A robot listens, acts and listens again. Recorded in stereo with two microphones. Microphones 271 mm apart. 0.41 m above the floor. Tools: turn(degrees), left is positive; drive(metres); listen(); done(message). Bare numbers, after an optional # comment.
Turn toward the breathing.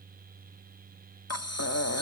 # The breathing: about 65° left or 115° left.
turn(65)
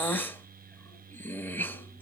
# So it is at 10° left.
turn(10)
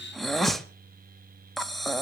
done("Facing the breathing.")